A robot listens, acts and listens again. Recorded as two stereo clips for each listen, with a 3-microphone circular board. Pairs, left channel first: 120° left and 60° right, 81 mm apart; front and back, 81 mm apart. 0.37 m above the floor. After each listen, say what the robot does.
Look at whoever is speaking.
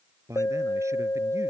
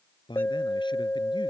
Turn 10° right.
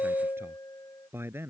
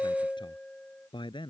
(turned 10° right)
Found it: a man speaking, straight ahead.